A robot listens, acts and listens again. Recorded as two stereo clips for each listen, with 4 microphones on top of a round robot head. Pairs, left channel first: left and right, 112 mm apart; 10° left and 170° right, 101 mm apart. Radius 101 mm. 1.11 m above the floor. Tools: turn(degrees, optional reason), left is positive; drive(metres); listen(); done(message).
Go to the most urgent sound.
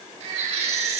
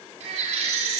turn(degrees=-135, reason="The baby crying: 135° right.")
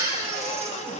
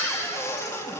turn(degrees=-30, reason="The baby crying is now 30° right.")
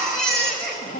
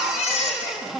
drive(metres=1.0)
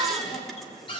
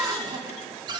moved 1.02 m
listen()
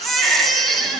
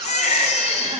drive(metres=1.0)
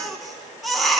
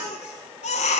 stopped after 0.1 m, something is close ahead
done("Arrived at the baby crying, straight ahead.")